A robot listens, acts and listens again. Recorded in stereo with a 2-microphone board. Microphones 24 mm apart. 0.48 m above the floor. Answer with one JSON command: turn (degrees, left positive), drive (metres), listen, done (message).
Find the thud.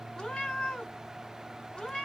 {"listen": true}
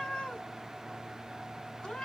{"listen": true}
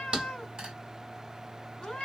{"turn": -40}
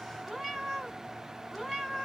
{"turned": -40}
{"listen": true}
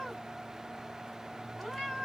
{"done": "I heard a thud, but can't make it out now. It was about straight ahead or 100° right."}